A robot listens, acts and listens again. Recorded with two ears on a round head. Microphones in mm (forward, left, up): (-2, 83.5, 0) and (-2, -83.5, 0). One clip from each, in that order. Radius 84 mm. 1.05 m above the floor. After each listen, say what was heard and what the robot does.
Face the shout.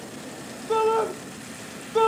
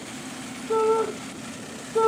The shout: about 60° left or 120° left. Turn 60° left.
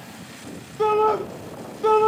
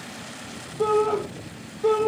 So it is at 65° left. Turn 65° left.
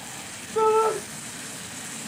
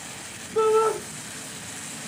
The shout is now 10° left. Turn 10° left.
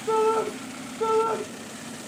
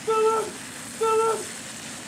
Found it: a shout, straight ahead.